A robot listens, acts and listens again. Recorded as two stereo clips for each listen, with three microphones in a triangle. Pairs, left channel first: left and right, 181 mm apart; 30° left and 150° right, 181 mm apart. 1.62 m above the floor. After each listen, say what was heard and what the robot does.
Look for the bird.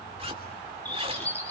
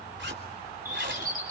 The bird: 170° left. Turn 170° left.
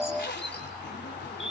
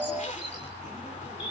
Keep listening.
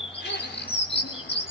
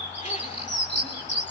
The bird is now 35° left. Turn 35° left.
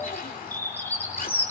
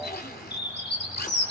The bird is now 10° left. Turn 10° left.
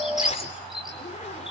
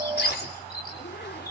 Found it: a bird, straight ahead.